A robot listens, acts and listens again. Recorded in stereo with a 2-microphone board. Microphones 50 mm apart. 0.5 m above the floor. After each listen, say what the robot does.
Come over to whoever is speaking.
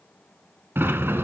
Keep listening.
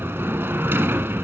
Keep listening.
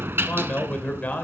Turn 30° left.
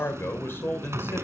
Turn 115° left.
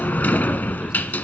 Keep listening.
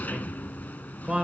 Turn 20° right.
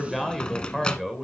Drive 1.0 m forward.
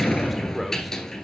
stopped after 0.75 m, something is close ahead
Keep listening.
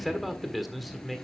Arrived at the man speaking, straight ahead.